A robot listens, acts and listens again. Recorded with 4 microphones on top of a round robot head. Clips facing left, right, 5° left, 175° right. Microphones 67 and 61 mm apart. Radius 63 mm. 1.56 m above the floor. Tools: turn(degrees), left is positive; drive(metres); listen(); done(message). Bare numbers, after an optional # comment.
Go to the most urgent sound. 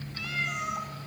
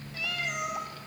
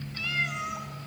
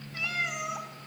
listen()
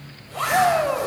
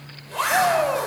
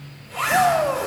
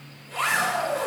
drive(1.0)
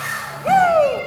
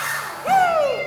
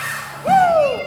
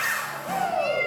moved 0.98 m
drive(1.0)
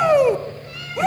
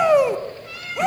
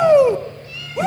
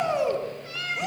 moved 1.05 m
drive(1.0)
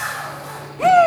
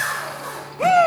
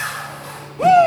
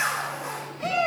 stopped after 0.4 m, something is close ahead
done("Arrived at the shout, straight ahead.")